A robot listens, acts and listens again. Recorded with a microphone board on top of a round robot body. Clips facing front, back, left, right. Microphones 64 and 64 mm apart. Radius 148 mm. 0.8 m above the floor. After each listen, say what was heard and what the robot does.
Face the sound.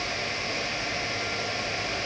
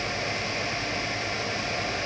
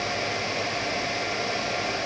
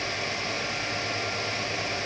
Keep listening.
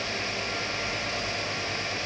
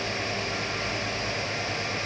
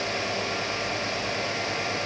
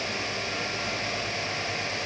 Keep listening.
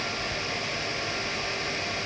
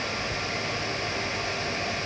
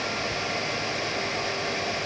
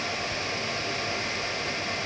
I can't make out anything to turn to.